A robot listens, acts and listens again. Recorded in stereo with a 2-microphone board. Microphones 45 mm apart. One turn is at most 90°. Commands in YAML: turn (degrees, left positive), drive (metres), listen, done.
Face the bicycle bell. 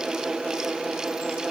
listen: true
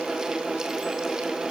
listen: true
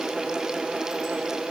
done: "I can't make out a bicycle bell."